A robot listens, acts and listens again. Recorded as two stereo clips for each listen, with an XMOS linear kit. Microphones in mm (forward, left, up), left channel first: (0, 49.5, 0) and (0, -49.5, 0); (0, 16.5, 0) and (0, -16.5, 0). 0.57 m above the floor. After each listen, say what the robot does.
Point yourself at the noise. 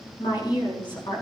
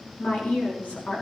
Turn 50° left.
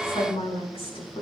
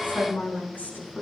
Turn 75° left.
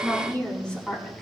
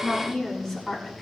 Turn 10° left.
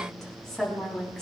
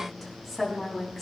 Found it: a woman speaking, straight ahead, over 4 m away.